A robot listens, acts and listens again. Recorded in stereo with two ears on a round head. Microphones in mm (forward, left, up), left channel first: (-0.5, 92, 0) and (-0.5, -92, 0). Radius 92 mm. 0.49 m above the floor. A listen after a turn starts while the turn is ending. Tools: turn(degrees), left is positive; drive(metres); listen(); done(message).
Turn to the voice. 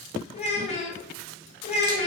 turn(degrees=30)
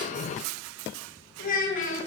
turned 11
turn(degrees=140)
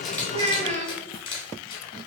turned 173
turn(degrees=-40)
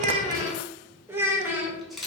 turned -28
turn(degrees=-10)
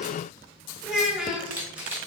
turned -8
done("Facing the child speaking.")